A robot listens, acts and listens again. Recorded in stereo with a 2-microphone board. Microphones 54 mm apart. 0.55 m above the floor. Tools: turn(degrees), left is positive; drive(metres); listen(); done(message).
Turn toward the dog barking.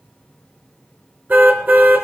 listen()
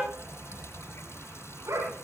turn(degrees=-90)
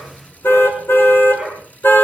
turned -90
done("Facing the dog barking.")